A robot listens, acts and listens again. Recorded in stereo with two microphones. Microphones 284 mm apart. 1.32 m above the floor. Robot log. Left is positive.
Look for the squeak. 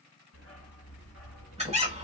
note: The squeak: about 20° right or 160° right.
cmd yaw -20
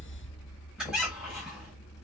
cmd idle
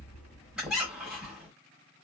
end: Facing the squeak, 2 to 4 m away.